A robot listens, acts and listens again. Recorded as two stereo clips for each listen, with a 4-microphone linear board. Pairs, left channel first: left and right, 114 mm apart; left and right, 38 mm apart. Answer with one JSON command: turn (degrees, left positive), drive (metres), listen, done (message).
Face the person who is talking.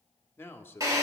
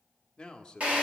{"turn": 20}
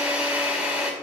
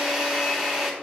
{"listen": true}
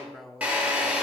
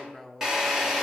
{"done": "Found it: a man speaking, straight ahead."}